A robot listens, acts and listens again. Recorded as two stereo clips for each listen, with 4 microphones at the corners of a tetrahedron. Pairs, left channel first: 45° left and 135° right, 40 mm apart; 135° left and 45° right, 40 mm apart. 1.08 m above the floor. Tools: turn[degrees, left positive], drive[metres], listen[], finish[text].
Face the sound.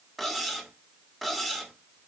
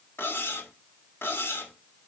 Thought: The cutlery clinking: 135° left.
Action: turn[135]
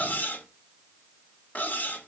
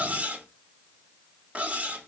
Thought: The cutlery clinking is now 10° left.
Action: turn[10]
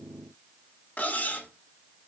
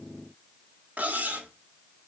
Action: finish[Found it: cutlery clinking, straight ahead.]